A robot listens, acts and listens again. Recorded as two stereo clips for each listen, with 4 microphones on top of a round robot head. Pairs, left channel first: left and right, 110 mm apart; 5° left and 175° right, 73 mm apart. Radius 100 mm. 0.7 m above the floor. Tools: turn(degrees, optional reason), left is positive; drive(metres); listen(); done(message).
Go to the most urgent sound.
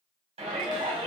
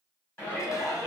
turn(degrees=-60, reason="The shout: 60° right.")
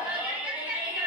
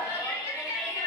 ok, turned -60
turn(degrees=-15, reason="The shout is now 15° right.")
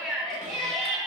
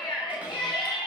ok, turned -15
drive(metres=1.0)
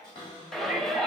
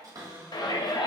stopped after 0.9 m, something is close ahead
done("I am next to the shout.")